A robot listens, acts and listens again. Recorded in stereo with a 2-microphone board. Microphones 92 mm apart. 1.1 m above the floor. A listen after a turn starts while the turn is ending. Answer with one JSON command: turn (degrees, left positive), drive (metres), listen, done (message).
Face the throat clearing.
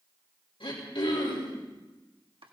{"turn": 90}
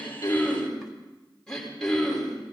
{"turn": 10}
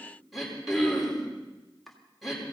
{"done": "Facing the throat clearing, over 4 m away."}